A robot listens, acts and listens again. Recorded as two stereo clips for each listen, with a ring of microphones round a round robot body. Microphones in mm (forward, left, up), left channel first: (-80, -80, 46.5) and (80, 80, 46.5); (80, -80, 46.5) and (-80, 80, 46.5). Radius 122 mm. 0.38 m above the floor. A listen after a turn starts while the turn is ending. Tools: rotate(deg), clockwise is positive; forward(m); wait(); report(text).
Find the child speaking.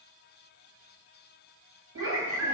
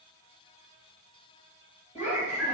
rotate(-15)
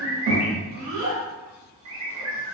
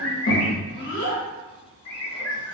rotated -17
report("Found it: a child speaking, straight ahead.")